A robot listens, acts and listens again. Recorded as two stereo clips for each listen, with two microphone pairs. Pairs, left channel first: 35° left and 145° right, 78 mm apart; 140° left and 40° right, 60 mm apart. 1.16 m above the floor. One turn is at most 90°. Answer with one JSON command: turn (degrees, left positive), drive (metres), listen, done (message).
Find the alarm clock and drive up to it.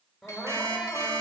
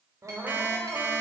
{"turn": -90}
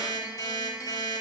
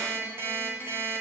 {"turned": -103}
{"drive": 1.0}
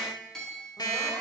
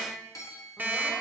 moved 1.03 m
{"turn": 15}
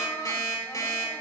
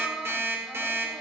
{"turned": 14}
{"drive": 1.0}
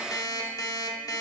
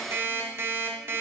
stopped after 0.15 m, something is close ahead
{"done": "I am next to the alarm clock."}